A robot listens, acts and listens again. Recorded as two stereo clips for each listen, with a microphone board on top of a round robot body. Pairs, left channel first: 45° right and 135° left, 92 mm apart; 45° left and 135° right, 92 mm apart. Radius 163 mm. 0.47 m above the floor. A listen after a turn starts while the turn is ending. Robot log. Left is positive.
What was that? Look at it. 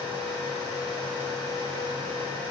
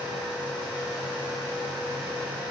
cmd idle
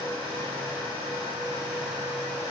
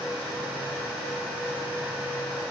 cmd idle
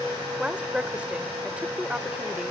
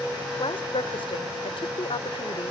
note: The woman speaking: 60° left.
cmd yaw +60
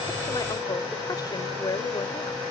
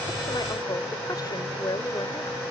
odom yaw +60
end: Facing the woman speaking.